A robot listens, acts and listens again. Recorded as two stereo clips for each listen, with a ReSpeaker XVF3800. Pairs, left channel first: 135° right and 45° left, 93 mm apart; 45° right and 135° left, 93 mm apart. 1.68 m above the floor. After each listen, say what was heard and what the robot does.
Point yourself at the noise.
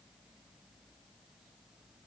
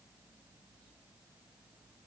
Keep listening.
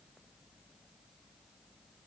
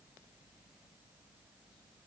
Keep listening.
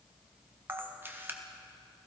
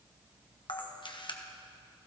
The camera shutter: 20° right. Turn 20° right.
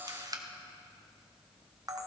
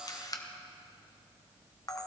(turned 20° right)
Facing the camera shutter, 1 to 2 m away.